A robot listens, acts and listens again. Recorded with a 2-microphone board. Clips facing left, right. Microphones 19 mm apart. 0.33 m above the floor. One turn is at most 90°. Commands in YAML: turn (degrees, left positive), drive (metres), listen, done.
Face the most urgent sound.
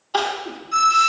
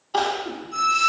turn: 15
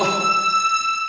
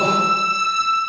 listen: true
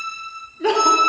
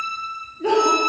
turn: 90
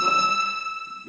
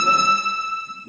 turn: 55
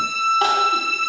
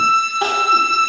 listen: true
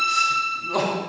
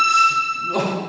turn: 15
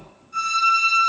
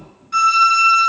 listen: true
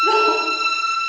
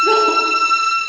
listen: true
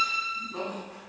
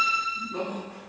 done: "Found it: crying, straight ahead."